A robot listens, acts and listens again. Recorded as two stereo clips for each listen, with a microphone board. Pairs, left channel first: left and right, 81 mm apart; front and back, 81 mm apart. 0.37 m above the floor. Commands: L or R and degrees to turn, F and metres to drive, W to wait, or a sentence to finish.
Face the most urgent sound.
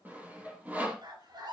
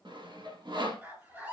R115
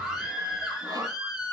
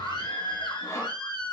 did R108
Found it: a scream, straight ahead, over 4 m away.